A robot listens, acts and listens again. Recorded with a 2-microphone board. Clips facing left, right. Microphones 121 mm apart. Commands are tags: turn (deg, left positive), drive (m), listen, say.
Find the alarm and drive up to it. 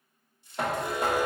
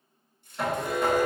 <turn deg="15"/>
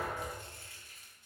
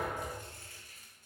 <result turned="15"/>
<listen/>
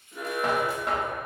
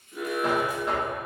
<turn deg="150"/>
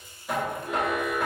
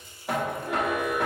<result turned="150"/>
<turn deg="-25"/>
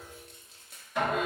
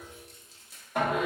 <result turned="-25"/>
<drive m="1.0"/>
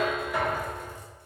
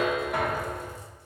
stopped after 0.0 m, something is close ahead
<turn deg="-10"/>
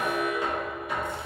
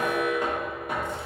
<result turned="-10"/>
<say>Blocked. The alarm is further on, straight ahead.</say>